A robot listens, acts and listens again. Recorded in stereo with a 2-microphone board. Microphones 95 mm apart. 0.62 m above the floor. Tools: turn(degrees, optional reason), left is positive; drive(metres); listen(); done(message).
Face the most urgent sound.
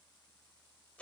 listen()
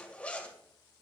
listen()
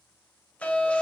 turn(degrees=30)
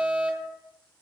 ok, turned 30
turn(degrees=-15, reason="So it is at 15° right.")
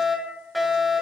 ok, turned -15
done("Facing the fire alarm, over 4 m away.")